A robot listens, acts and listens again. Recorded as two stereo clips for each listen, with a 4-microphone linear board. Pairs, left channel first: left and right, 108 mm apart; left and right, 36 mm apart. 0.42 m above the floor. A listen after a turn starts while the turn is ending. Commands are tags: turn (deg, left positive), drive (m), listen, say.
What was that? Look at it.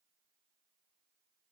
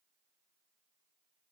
<listen/>
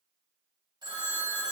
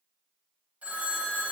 <turn deg="-45"/>
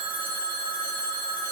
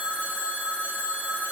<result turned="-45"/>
<turn deg="-85"/>
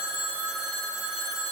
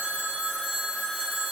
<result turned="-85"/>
<say>Facing the phone ringing, 1 to 2 m away.</say>